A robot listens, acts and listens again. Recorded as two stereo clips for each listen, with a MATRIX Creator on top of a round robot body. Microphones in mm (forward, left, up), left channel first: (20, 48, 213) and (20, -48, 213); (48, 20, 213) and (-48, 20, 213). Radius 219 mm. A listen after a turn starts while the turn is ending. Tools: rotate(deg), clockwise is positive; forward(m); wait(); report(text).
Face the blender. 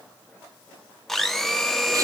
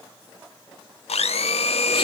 report("Found it: a blender, straight ahead.")